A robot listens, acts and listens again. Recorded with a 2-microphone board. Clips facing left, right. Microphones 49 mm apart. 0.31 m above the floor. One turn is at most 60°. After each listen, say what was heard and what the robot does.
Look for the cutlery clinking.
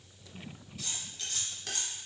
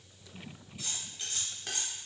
Turn 30° right.
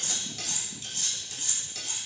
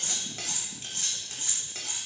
So it is at 135° right. Turn 60° right.
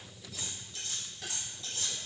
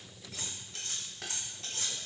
The cutlery clinking is now 70° right. Turn 60° right.
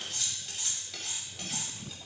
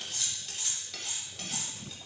Found it: cutlery clinking, straight ahead, under 1 m away.